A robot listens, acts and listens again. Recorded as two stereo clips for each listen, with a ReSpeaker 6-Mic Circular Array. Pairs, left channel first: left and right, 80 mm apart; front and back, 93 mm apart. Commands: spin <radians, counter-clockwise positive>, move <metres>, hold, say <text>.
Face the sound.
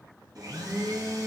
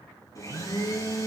spin -0.96
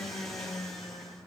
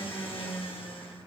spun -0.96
say Facing the blender, 2 to 4 m away.